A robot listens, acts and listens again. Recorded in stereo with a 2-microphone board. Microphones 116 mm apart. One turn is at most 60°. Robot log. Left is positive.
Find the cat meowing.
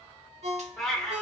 cmd yaw +30
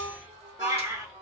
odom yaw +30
note: So it is at 25° right.
cmd yaw -25
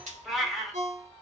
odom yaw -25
end: Found it: a cat meowing, straight ahead, under 1 m away.